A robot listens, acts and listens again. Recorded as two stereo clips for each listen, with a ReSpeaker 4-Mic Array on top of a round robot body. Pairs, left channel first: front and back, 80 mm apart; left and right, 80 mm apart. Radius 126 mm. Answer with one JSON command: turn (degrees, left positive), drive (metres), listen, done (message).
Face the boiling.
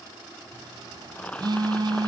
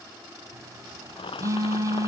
{"turn": 75}
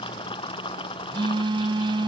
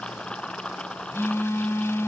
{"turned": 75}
{"turn": 10}
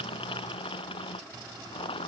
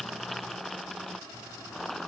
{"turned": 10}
{"done": "Found it: boiling, straight ahead."}